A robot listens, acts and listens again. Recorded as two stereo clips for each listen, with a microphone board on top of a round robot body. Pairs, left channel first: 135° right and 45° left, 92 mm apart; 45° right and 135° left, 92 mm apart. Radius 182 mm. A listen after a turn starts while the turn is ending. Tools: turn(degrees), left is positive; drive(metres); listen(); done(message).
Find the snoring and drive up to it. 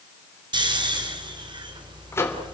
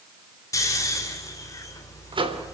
turn(degrees=10)
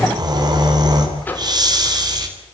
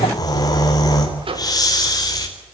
drive(metres=1.0)
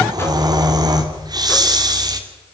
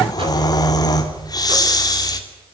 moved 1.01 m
drive(metres=1.0)
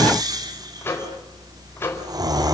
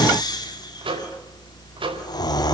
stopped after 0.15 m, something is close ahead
done("Something is in my way. I am facing the snoring but have not reached it.")